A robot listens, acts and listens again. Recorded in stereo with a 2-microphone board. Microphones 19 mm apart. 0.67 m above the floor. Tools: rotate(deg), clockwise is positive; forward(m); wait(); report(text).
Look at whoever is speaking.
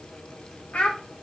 rotate(-90)
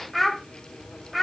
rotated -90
report("Found it: a child speaking, straight ahead.")